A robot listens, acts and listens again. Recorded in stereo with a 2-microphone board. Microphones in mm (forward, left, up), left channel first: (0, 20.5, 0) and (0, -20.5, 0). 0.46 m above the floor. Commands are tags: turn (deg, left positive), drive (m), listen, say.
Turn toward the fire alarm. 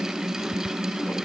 <listen/>
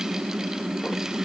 <listen/>
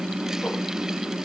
<say>I can't make out a fire alarm to turn to.</say>